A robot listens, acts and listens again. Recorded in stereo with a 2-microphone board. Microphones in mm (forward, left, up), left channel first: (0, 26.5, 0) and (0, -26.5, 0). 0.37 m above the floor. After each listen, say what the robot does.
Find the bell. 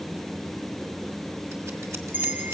Turn 40° right.
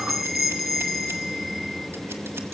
Facing the bell.